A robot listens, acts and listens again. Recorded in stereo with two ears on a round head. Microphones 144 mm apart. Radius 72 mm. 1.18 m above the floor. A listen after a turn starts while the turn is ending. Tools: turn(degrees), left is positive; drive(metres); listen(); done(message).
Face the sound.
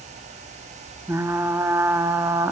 turn(degrees=-15)
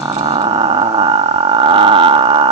turn(degrees=-150)
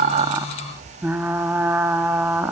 turn(degrees=-10)
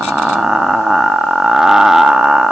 done("Facing the frying.")